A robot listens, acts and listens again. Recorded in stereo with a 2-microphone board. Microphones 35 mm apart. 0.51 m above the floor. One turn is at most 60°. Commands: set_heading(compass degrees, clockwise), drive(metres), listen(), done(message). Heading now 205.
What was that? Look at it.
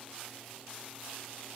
listen()
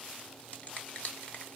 set_heading(155)
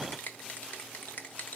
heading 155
set_heading(95)
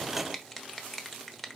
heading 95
done("Facing the finger snap, 1 to 2 m away.")